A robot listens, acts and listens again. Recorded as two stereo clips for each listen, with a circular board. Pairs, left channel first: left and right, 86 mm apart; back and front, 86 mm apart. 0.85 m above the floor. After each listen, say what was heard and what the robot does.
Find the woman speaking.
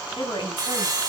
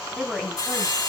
The woman speaking: 95° left. Turn 95° left.
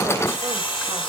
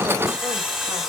Keep listening.
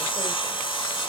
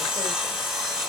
Keep listening.
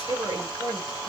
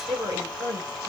The woman speaking is now 25° right. Turn 25° right.
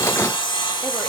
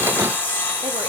Keep listening.
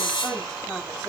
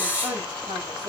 The woman speaking is now 10° left. Turn 10° left.
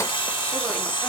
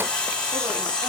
Keep listening.
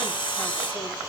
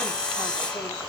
Keep listening.
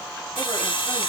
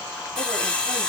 I heard a woman speaking from this way, but can't make it out now.